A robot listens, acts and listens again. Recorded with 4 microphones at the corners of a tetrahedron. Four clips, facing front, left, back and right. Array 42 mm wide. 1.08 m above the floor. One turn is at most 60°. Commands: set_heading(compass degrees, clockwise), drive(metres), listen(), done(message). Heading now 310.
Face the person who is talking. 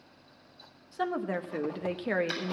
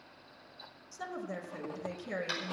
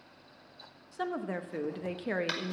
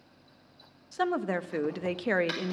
set_heading(10)
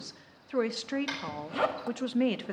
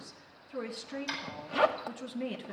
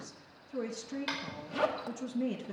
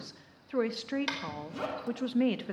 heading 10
set_heading(40)
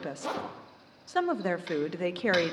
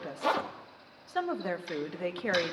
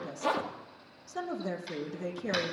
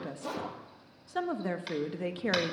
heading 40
set_heading(30)
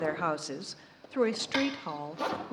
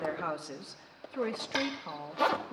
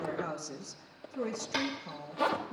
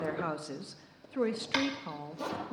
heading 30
done("Found it: a woman speaking, straight ahead, under 1 m away.")